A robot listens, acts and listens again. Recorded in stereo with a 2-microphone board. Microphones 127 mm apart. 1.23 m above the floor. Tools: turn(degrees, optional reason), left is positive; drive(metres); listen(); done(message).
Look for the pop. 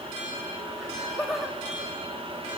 listen()
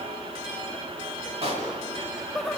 turn(degrees=-55, reason="The pop: about 55° right or 125° right.")
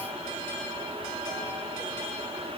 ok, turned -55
listen()
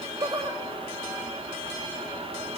done("I heard a pop, but can't make it out now. It was about straight ahead or 70° right.")